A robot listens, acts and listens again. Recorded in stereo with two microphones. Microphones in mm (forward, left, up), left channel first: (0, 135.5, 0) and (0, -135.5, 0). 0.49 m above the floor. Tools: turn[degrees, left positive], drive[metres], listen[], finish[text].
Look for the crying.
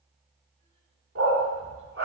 Action: listen[]
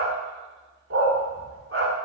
Action: listen[]
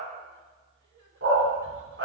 Action: finish[I can't make out crying to turn to.]